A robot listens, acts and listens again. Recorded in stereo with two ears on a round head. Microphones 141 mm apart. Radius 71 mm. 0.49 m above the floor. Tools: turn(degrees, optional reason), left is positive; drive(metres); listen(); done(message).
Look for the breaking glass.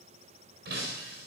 turn(degrees=-70, reason="The breaking glass: about 70° right or 110° right.")
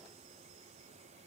listen()
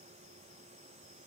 done("I heard breaking glass, but can't make it out now. It was about straight ahead or 40° right.")